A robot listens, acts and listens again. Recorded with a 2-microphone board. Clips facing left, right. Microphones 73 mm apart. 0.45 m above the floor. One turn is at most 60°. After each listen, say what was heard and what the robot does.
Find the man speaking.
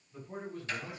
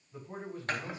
The man speaking: about 25° right or 155° right. Turn 25° right.
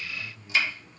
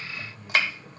Turn 30° right.
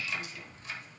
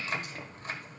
Keep listening.
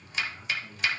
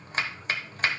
Facing the man speaking, over 4 m away.